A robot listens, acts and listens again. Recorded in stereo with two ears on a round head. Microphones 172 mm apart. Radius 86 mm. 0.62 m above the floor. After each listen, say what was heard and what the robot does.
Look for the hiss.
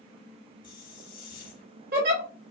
The hiss: about 45° left or 135° left. Turn 45° left.
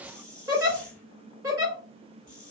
Found it: a hiss, straight ahead.